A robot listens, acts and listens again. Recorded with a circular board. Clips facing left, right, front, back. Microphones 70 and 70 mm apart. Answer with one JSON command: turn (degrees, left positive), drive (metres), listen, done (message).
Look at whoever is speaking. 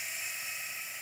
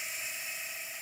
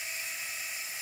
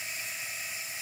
{"listen": true}
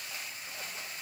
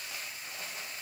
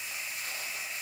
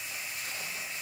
{"listen": true}
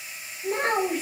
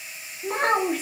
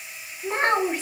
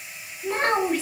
{"turn": -75}
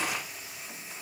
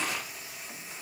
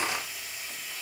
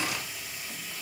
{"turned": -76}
{"listen": true}
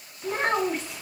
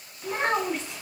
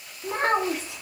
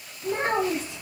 {"done": "Found it: a child speaking, straight ahead, 1 to 2 m away."}